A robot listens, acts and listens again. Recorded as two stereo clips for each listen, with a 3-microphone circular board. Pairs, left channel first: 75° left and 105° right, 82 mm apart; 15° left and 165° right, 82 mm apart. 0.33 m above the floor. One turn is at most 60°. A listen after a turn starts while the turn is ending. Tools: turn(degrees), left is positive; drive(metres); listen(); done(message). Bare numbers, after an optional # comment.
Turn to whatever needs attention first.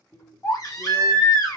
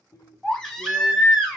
# The baby crying: 95° left.
turn(60)
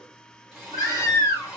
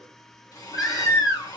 # The baby crying is now 30° left.
turn(30)
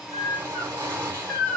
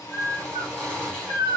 # The baby crying is now 20° right.
turn(-20)
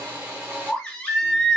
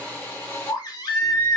done("Found it: a baby crying, straight ahead, 1 to 2 m away.")